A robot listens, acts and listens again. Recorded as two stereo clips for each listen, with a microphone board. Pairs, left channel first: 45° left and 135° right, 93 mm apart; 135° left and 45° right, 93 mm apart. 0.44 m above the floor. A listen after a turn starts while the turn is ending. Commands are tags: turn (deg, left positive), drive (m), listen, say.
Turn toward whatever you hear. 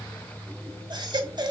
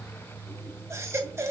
<turn deg="-100"/>
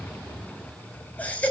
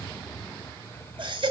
<turn deg="-25"/>
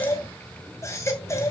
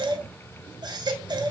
<turn deg="-10"/>
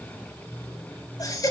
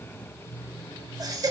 <say>Found it: a baby crying, straight ahead.</say>